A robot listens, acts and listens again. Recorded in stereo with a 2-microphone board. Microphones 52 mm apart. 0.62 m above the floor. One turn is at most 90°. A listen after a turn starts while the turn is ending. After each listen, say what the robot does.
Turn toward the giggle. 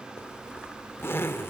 Keep listening.
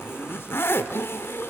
Keep listening.
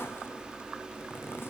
I can't make out a giggle to turn to.